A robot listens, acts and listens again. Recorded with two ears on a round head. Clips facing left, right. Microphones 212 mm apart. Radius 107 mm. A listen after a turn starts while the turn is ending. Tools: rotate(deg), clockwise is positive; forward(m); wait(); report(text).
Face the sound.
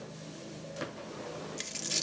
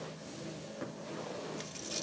rotate(-35)
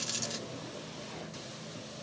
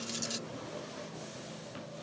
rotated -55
wait()
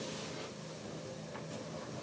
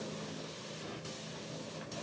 report("I heard a dropped coin, but can't make it out now. It was about 20° right or 90° left.")